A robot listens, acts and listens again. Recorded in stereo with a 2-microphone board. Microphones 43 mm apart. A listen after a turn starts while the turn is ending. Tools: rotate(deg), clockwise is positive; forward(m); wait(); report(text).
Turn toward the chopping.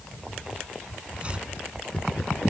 rotate(25)
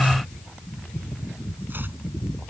rotate(130)
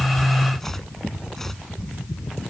report("Found it: chopping, straight ahead.")